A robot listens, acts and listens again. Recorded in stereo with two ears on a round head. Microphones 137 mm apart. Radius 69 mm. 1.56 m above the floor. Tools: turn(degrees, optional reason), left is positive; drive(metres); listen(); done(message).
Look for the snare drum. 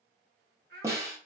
turn(degrees=-20, reason="The snare drum: about 20° right or 160° right.")
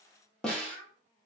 done("Facing the snare drum, under 1 m away.")